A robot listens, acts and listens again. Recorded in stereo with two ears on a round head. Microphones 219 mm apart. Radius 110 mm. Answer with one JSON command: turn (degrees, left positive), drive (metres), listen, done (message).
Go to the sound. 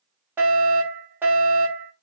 {"turn": -30}
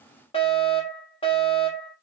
{"turn": 25}
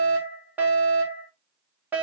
{"turn": -10}
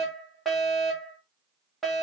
{"drive": 1.0}
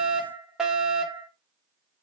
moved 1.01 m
{"drive": 1.0}
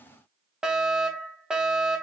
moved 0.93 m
{"drive": 1.0}
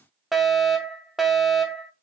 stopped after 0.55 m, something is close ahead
{"done": "I am next to the fire alarm."}